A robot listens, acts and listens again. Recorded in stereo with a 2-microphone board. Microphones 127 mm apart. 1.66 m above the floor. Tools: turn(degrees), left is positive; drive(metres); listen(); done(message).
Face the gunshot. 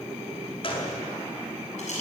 turn(degrees=45)
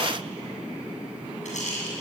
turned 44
listen()
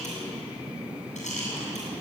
done("I heard a gunshot, but can't make it out now. It was about 5° left or 90° left.")